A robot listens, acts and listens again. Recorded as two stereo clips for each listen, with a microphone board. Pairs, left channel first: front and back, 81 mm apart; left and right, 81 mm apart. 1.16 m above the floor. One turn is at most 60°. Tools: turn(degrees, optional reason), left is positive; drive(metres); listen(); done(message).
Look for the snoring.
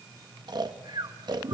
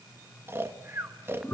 turn(degrees=-60, reason="The snoring: 150° right.")
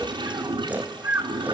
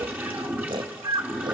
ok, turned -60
turn(degrees=-60, reason="The snoring is now 110° right.")
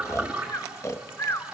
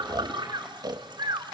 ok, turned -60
turn(degrees=-55, reason="The snoring is now 55° right.")
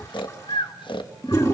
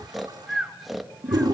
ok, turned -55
done("Found it: snoring, straight ahead, 1 to 2 m away.")